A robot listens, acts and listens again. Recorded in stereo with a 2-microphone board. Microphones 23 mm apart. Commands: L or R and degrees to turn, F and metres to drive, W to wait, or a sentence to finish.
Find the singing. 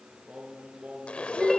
R90
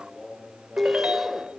Found it: singing, straight ahead, over 4 m away.